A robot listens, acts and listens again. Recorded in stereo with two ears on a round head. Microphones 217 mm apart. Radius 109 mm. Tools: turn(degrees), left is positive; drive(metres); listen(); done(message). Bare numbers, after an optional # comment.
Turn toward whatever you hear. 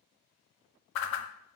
# The whoosh: about 60° left or 120° left.
turn(60)
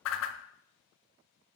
# So it is at 60° left.
turn(60)
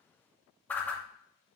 done("Facing the whoosh.")